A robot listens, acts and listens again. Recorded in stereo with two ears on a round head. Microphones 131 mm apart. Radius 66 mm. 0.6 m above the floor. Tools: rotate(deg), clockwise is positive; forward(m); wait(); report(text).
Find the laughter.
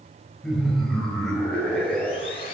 rotate(-30)
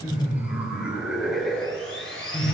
rotate(-30)
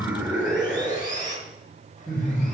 rotate(-30)
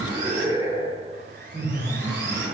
rotate(20)
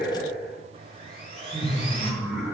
report("Found it: laughter, straight ahead, 1 to 2 m away.")